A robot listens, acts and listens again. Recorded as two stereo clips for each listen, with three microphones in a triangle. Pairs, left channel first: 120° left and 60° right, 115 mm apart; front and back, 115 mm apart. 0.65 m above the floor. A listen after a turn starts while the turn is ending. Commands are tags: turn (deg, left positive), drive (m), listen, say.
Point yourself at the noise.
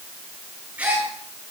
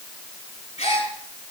<turn deg="15"/>
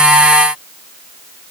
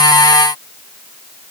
<say>Facing where the gasp came from. I can't hear it now.</say>